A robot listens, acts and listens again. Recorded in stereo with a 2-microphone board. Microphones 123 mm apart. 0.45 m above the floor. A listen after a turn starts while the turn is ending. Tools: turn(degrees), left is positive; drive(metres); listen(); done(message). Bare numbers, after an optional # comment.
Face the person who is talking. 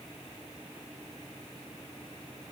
listen()
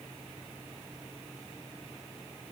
listen()
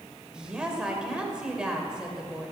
turn(-30)
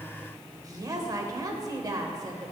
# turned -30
# So it is at 140° right.
turn(-140)
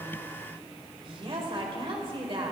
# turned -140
# The woman speaking is now 55° right.
turn(-55)
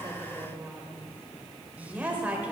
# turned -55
# The woman speaking is now 15° right.
turn(-15)
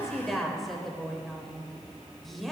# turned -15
done("Found it: a woman speaking, straight ahead.")